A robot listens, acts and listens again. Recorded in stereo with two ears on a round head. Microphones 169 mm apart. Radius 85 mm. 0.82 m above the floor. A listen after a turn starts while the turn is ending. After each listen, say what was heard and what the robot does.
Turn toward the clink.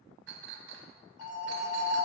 The clink: about 65° right or 115° right. Turn 65° right.
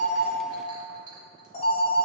So it is at 25° right. Turn 25° right.
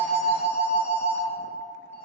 Keep listening.
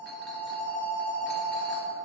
Keep listening.
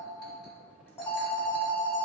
I heard a clink from this way, but can't make it out now.